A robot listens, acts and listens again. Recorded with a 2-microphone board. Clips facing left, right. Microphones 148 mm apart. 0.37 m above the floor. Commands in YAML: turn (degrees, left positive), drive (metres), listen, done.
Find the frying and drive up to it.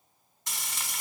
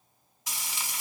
turn: -30
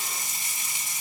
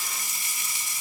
turn: 25
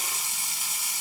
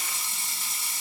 turn: 10
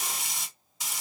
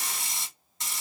drive: 1.0
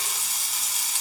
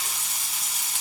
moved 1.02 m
drive: 1.0
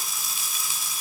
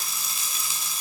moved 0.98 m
drive: 1.0
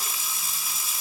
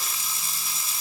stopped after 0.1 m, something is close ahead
done: "I am next to the frying."